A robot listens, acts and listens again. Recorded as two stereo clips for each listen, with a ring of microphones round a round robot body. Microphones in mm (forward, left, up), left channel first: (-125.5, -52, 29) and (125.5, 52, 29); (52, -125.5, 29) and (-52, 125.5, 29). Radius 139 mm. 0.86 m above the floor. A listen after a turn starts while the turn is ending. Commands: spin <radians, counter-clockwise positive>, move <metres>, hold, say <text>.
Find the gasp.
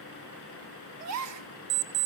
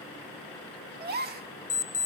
spin 0.96
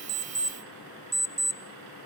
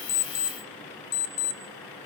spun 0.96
say I heard a gasp from this way, but can't make it out now.